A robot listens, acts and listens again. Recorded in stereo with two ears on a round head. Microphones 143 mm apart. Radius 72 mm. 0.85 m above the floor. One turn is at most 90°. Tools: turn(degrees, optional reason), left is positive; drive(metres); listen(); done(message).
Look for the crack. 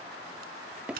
turn(degrees=-60, reason="The crack: about 60° right or 120° right.")
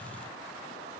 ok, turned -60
listen()
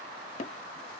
done("I heard a crack, but can't make it out now. It was about straight ahead or 60° right.")